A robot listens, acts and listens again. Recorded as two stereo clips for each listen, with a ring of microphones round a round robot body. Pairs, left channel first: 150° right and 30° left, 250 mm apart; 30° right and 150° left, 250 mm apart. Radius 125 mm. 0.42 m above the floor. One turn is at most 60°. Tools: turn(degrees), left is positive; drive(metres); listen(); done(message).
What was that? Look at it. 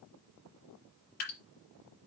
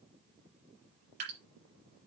turn(degrees=-60)
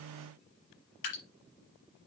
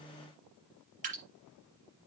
turn(degrees=-60)
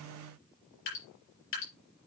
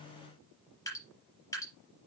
turn(degrees=-60)
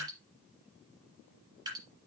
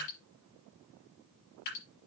turn(degrees=-45)
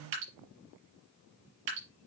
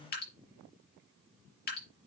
turn(degrees=25)
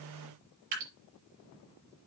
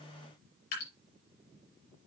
turn(degrees=10)
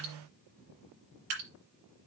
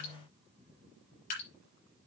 done("Found it: dripping, straight ahead.")